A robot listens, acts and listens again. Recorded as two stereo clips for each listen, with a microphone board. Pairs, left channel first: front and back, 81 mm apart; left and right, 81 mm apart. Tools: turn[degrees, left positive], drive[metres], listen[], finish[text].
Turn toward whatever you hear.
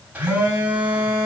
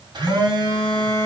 Thought: The phone buzzing: 110° right.
Action: turn[-110]
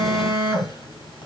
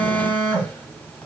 Thought: The phone buzzing is now 20° left.
Action: turn[20]
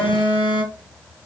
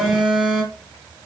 Action: finish[Facing the phone buzzing.]